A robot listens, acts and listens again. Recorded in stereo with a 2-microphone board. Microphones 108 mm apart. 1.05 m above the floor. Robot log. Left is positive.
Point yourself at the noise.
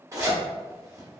note: The zipper: about 30° right or 150° right.
cmd yaw -30
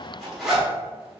end: Found it: a zipper, straight ahead.